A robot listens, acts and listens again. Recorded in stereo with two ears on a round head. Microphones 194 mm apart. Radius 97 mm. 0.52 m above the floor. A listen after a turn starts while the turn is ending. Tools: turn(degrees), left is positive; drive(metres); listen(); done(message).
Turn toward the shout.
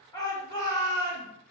turn(degrees=20)
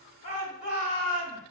turn(degrees=140)
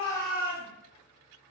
turn(degrees=-25)
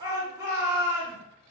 turn(degrees=-20)
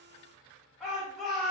done("Facing the shout.")